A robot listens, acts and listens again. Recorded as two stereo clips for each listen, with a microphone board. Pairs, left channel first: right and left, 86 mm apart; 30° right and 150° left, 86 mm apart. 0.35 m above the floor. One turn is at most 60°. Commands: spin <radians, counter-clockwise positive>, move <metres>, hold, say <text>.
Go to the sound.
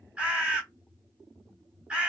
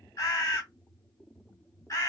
spin 0.17
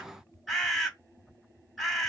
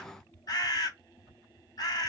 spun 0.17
move 1.0
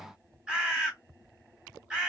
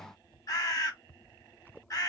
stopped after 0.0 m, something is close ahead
spin 0.17
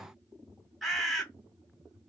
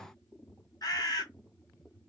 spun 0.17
say Blocked. The bird is further on, straight ahead.